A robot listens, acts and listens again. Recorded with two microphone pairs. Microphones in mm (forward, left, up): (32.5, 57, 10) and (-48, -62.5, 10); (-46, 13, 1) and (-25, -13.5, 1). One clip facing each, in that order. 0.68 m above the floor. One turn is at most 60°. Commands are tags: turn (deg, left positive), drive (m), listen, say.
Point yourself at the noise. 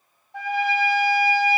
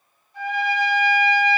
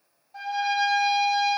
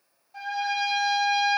<turn deg="45"/>
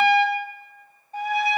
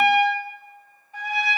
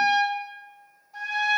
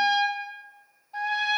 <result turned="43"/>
<say>Facing the trumpet, 1 to 2 m away.</say>